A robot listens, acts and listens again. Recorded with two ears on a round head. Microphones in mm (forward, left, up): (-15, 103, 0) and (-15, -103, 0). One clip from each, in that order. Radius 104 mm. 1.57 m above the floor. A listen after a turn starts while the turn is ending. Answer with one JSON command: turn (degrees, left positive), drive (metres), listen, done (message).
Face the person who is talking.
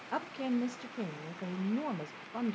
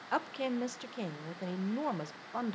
{"turn": -30}
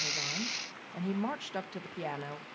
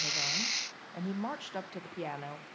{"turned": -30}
{"done": "Found it: a woman speaking, straight ahead, under 1 m away."}